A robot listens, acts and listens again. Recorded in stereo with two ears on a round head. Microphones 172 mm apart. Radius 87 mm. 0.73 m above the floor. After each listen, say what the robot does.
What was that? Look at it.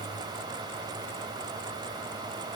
Keep listening.
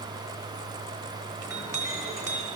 Turn 15° right.
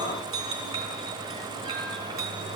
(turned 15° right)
Turn 150° right.
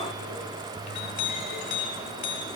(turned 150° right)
Turn 40° left.
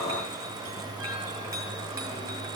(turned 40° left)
Turn 15° right.
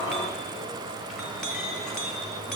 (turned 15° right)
Found it: a clink, straight ahead.